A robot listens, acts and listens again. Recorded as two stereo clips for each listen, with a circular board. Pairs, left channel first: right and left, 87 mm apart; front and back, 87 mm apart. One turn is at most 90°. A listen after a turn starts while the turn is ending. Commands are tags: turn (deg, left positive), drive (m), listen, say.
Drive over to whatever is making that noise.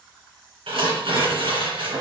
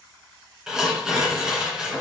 <turn deg="90"/>
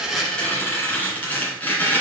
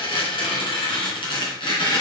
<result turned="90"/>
<turn deg="-20"/>
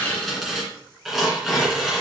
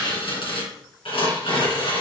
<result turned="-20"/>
<drive m="1.0"/>
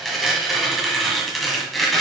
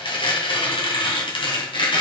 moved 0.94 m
<drive m="1.0"/>
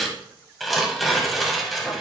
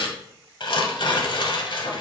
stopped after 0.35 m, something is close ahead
<say>Arrived at the tearing paper, straight ahead.</say>